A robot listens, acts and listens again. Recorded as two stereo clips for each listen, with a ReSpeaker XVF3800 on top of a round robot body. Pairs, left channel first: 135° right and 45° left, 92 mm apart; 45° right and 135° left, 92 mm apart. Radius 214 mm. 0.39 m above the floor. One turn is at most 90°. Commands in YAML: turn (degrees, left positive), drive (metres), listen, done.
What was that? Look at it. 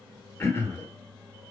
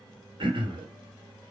turn: 90
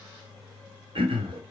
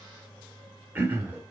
turn: 70
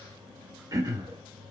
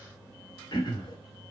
done: "Facing the throat clearing, 1 to 2 m away."